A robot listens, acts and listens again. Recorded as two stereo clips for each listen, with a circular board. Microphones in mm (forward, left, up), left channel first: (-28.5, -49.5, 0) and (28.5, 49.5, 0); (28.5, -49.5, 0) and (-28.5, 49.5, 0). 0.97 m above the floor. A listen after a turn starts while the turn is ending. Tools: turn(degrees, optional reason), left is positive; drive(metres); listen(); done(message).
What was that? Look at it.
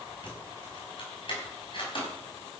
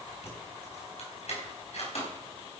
turn(degrees=-80, reason="The keys jangling: 80° right.")
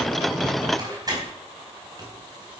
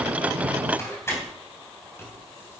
done("Found it: keys jangling, straight ahead.")